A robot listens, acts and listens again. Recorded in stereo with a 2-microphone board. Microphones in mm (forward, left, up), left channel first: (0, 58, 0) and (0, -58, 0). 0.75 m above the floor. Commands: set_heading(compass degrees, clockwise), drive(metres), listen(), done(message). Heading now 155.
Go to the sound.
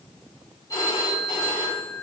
set_heading(125)
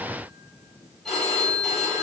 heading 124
drive(1.0)
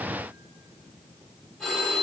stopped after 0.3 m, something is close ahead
done("Blocked. The phone ringing is further on, straight ahead.")